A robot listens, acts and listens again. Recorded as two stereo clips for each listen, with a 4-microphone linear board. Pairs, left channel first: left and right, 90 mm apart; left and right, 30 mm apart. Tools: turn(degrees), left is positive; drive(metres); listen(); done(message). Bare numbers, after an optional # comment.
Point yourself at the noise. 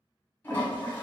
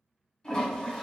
# The toilet flushing: about 25° left or 155° left.
turn(25)
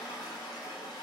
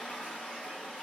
# So it is at 125° left.
turn(125)
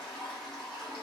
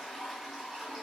done("Found it: a toilet flushing, straight ahead.")